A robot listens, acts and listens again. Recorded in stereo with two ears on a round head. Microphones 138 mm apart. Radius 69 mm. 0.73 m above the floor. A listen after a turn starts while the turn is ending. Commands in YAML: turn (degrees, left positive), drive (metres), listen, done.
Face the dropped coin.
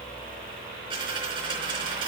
turn: -35
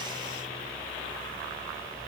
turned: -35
listen: true
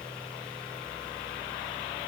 done: "I heard a dropped coin, but can't make it out now. It was about straight ahead or 110° right."